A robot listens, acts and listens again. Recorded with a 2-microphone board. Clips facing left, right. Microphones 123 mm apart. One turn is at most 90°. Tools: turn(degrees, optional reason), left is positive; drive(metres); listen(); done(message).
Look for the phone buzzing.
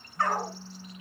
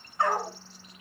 turn(degrees=40, reason="The phone buzzing: about 40° left or 140° left.")
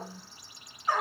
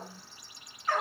done("Found it: a phone buzzing, straight ahead.")